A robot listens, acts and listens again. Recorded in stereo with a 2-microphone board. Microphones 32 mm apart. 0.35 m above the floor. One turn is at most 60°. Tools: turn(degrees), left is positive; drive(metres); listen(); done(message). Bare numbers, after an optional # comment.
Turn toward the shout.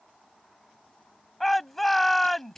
turn(30)
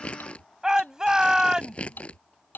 # So it is at 20° right.
turn(-20)
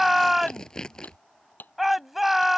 done("Facing the shout.")